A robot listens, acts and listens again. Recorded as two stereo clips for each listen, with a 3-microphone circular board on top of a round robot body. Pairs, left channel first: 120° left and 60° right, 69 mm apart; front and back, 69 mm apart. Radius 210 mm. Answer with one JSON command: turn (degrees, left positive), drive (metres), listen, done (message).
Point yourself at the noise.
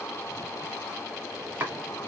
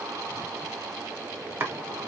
{"turn": -125}
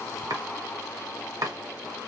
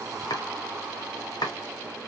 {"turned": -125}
{"turn": -25}
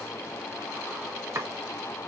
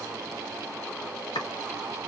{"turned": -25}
{"turn": -10}
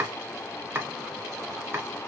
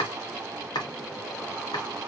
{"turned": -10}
{"done": "Found it: chopping, straight ahead."}